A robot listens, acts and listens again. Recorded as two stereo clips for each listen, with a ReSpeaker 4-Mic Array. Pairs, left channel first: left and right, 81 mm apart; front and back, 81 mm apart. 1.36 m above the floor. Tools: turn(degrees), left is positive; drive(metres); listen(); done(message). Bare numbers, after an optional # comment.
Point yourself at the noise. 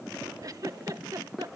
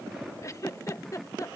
# The giggle: 50° right.
turn(-50)
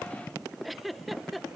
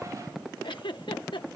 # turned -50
done("Facing the giggle.")